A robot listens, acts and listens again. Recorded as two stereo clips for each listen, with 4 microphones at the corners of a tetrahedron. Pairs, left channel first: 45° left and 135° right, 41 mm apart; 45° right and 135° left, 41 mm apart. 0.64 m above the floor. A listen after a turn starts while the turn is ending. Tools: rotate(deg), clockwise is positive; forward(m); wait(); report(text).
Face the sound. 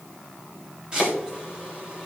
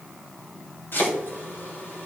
rotate(70)
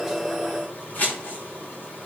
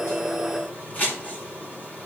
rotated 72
report("Found it: chopping, straight ahead.")